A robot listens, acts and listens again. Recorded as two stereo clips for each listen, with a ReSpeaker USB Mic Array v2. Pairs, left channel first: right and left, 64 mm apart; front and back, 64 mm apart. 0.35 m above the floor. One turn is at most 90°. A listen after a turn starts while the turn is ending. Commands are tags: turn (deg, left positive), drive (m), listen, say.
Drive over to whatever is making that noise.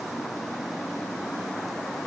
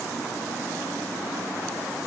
<listen/>
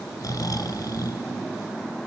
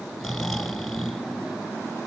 <turn deg="-90"/>
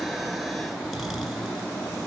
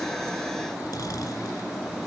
<drive m="1.0"/>
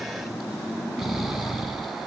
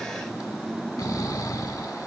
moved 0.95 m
<drive m="1.0"/>
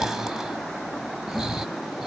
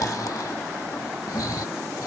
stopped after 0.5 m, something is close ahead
<turn deg="10"/>
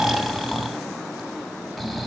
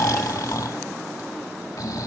<say>I am next to the snoring.</say>